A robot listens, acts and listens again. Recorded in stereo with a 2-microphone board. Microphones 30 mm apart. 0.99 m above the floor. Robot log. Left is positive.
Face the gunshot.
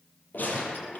note: The gunshot: about 65° left or 115° left.
cmd yaw +65
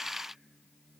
cmd idle
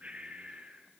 end: I heard a gunshot, but can't make it out now. It was about straight ahead or 50° left.